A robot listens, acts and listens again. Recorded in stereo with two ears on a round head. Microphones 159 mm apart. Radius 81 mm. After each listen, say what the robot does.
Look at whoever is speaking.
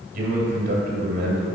Turn 60° right.
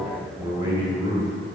Turn 25° right.
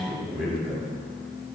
Found it: a man speaking, straight ahead.